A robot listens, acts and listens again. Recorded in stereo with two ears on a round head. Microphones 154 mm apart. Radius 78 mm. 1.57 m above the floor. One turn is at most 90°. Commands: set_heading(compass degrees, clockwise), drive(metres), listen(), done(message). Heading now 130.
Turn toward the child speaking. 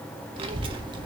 set_heading(160)
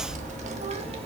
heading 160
set_heading(195)
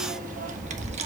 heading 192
set_heading(232)
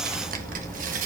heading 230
set_heading(320)
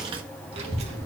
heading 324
set_heading(4)
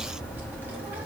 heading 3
set_heading(13)
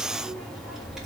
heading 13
done("Found it: a child speaking, straight ahead.")